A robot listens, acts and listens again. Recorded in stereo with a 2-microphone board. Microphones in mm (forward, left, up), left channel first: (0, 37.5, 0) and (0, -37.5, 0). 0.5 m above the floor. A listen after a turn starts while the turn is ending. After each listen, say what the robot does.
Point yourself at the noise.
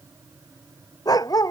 Turn 60° left.
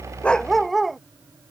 Found it: a dog barking, straight ahead.